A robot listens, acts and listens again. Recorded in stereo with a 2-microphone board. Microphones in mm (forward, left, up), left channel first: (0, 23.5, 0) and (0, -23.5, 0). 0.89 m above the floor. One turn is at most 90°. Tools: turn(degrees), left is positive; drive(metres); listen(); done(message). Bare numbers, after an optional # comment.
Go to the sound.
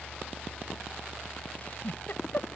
# The giggle: about 45° left or 135° left.
turn(45)
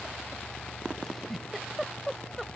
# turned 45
drive(1.0)
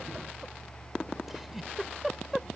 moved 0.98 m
drive(1.0)
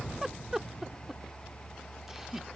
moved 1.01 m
# The giggle is now 10° right.
turn(-10)
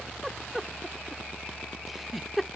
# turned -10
drive(1.0)
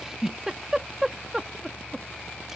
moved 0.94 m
# The giggle is now 10° right.
turn(-10)
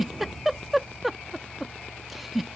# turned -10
drive(1.0)
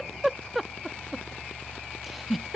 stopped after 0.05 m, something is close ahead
done("Arrived at the giggle, straight ahead.")